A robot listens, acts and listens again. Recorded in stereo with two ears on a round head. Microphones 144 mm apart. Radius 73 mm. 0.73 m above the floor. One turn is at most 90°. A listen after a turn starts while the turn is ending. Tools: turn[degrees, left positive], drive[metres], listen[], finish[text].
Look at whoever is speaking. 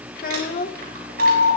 Thought: The child speaking: about 55° left or 125° left.
Action: turn[55]
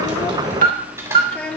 Thought: So it is at 10° left.
Action: turn[10]
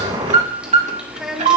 Action: finish[Found it: a child speaking, straight ahead, 1 to 2 m away.]